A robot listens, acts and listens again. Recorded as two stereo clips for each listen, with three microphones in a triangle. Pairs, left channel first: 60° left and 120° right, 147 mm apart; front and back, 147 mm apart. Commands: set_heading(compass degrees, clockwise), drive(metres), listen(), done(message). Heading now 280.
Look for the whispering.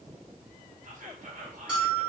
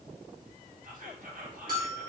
set_heading(75)
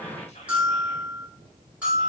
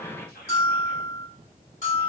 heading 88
set_heading(73)
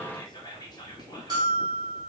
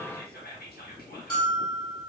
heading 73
done("Found it: whispering, straight ahead, 1 to 2 m away.")